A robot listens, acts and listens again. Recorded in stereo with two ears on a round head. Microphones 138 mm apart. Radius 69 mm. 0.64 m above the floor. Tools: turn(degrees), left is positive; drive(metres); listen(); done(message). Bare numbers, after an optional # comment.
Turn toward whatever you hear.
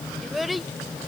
turn(30)
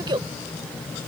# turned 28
# So it is at 30° right.
turn(-30)
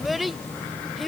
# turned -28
done("Found it: a child speaking, straight ahead.")